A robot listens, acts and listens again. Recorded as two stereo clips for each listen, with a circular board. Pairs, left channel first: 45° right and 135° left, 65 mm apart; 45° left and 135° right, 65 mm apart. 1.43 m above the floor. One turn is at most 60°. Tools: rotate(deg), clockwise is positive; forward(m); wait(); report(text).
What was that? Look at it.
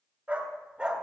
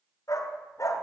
rotate(-60)
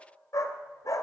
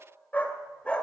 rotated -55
rotate(30)
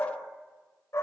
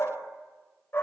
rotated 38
rotate(10)
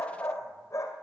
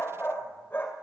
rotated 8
rotate(15)
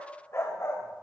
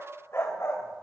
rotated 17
report("Found it: a dog barking, straight ahead.")